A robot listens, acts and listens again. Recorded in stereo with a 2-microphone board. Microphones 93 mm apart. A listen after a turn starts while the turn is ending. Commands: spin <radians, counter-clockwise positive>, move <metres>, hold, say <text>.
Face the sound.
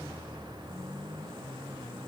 hold
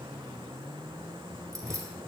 spin -0.61
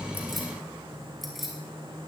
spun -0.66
say Found it: keys jangling, straight ahead, 2 to 4 m away.